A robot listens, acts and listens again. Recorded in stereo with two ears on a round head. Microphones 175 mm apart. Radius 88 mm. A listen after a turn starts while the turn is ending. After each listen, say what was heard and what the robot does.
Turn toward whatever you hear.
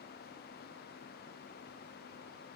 Keep listening.
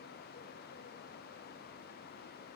Keep listening.
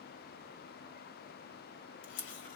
The camera shutter: about 65° left or 115° left. Turn 65° left.
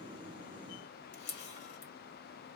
So it is at 50° left. Turn 50° left.
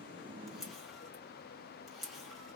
Facing the camera shutter.